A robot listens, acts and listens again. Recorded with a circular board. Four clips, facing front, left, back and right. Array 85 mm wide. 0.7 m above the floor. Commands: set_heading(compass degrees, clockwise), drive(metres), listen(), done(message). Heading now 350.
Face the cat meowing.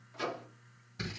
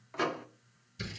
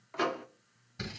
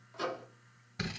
listen()
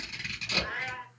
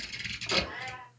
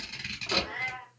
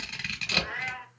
set_heading(30)
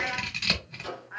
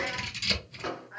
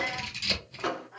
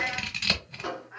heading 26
done("Facing the cat meowing, 2 to 4 m away.")